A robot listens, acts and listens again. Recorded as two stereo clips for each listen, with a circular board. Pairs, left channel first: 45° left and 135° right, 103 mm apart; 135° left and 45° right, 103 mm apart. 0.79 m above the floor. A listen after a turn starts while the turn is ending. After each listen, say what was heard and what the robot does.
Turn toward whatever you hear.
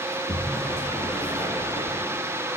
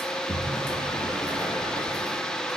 The sliding door: 60° left. Turn 60° left.
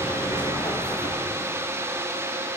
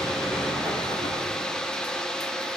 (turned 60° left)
Facing the sliding door, over 4 m away.